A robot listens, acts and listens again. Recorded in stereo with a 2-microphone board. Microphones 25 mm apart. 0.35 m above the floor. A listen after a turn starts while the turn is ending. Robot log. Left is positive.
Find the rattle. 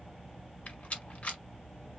note: The rattle: about 60° left or 120° left.
cmd yaw +60
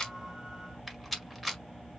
end: Found it: a rattle, straight ahead.